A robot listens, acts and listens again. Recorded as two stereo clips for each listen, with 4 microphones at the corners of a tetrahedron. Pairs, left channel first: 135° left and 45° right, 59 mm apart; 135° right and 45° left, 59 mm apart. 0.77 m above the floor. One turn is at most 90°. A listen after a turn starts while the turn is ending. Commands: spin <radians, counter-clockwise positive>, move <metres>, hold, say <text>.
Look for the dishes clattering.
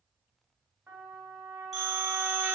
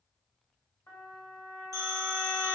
hold
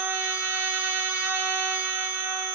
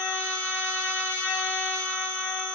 hold
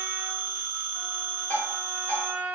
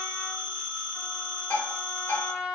spin 1.57
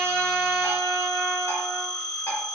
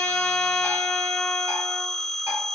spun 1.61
spin 1.57
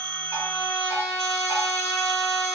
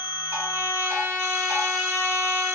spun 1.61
hold
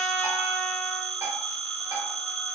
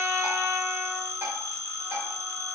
say Facing where the dishes clattering came from. I can't hear it now.